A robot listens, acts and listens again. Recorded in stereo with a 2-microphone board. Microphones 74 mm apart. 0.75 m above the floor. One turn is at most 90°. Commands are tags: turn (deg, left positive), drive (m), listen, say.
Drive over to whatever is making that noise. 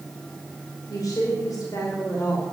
<turn deg="55"/>
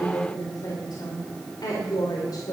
<turn deg="70"/>
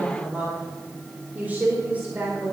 <turn deg="-25"/>
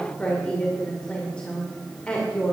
<turn deg="15"/>
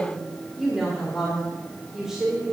<drive m="1.0"/>
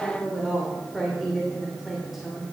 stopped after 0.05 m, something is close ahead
<say>Something is in my way. I am facing the woman speaking but have not reached it.</say>